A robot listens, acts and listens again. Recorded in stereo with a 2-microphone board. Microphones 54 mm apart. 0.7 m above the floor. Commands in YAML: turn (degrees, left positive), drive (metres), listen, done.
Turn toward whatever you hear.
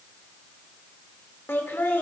turn: 40
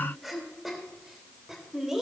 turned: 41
turn: -10
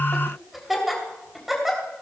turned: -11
done: "Facing the laughter."